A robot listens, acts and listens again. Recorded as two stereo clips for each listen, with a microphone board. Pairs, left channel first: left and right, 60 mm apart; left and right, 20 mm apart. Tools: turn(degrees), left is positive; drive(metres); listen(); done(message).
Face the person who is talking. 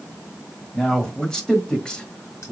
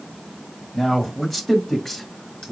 turn(degrees=15)
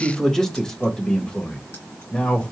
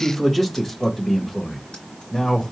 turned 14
turn(degrees=20)
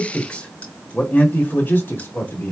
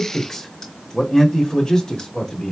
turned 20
turn(degrees=35)
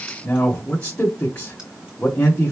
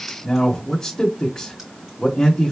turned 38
turn(degrees=20)
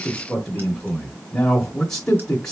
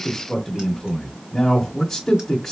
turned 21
turn(degrees=10)
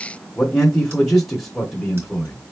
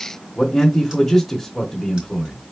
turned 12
done("Found it: a man speaking, straight ahead, 1 to 2 m away.")